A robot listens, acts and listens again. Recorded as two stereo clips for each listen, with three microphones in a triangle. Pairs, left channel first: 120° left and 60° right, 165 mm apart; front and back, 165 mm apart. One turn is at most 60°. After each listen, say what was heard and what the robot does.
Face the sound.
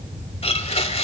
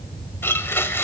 The blender: 75° left. Turn 60° left.
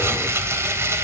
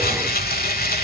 The blender is now 15° left. Turn 15° left.
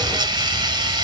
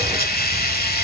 Found it: a blender, straight ahead, 1 to 2 m away.